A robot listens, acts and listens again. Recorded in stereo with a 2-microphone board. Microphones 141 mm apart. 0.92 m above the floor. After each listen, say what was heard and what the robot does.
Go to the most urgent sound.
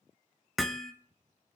Keep listening.
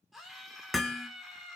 Turn 30° left.
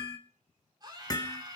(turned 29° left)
So it is at 30° right. Turn 30° right.
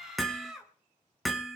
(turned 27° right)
Drive 1.0 m forward.
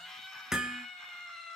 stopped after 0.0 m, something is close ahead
Blocked. The scream is further on, straight ahead.